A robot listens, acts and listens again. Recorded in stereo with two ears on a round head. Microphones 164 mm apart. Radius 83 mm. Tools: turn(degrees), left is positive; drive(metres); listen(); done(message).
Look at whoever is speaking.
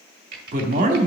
turn(degrees=-45)
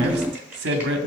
turn(degrees=-85)
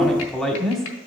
done("Facing the man speaking.")